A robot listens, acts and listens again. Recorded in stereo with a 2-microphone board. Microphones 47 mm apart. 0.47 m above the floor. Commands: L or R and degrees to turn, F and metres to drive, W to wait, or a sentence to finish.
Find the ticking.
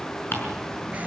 L50
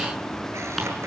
W
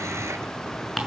Facing the ticking, over 4 m away.